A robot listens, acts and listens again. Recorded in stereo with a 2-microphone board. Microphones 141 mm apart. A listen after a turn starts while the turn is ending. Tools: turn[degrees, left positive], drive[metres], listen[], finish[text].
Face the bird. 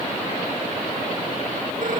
Action: listen[]
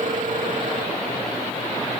Action: listen[]
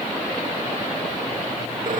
Action: finish[I can't make out a bird.]